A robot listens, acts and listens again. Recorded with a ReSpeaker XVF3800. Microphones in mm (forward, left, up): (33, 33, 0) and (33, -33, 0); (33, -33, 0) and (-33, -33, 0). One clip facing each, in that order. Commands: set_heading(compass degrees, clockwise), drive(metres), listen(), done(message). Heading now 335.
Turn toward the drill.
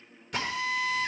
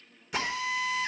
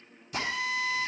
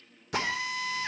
set_heading(145)
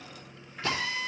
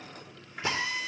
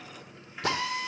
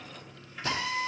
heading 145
set_heading(165)
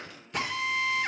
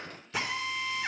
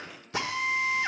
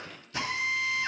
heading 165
done("Found it: a drill, straight ahead, 1 to 2 m away.")